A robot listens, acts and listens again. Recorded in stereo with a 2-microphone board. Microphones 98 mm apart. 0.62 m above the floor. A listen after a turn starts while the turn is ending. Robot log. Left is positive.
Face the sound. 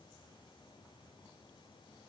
cmd idle
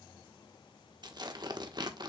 note: The tearing paper: about 50° right or 130° right.
cmd yaw -50
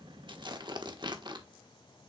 note: So it is at 70° right.
cmd yaw -70
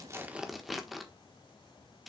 end: Facing the tearing paper.